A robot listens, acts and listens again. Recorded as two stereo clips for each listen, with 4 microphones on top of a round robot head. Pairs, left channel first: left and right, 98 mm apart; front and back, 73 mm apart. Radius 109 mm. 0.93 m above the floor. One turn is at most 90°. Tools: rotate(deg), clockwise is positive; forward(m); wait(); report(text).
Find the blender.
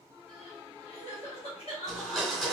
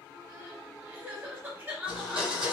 rotate(-90)
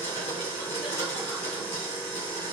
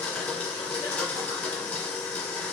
rotate(-70)
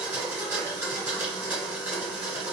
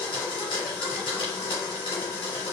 rotate(15)
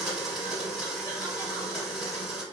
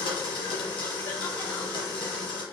report("Facing the blender, 1 to 2 m away.")